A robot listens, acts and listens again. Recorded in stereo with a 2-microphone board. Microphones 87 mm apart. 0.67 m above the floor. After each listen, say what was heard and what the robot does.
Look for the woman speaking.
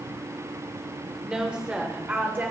The woman speaking: about 25° right or 155° right. Turn 25° right.
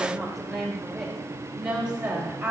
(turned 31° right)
The woman speaking: about 20° right or 160° right. Turn 20° right.
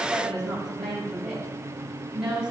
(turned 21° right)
Turn 30° right.
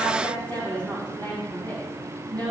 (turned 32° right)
So it is at 25° left. Turn 25° left.
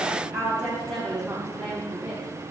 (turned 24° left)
Found it: a woman speaking, straight ahead, 2 to 4 m away.